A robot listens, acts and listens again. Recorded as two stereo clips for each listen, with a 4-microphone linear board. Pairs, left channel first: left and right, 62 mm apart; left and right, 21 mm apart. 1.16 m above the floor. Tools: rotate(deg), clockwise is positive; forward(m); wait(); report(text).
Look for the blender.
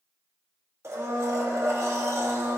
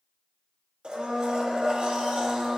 rotate(50)
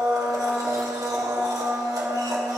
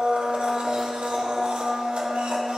rotate(80)
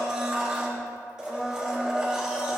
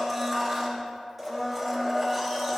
rotate(10)
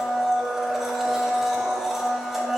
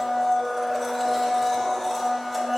report("Facing the blender, 1 to 2 m away.")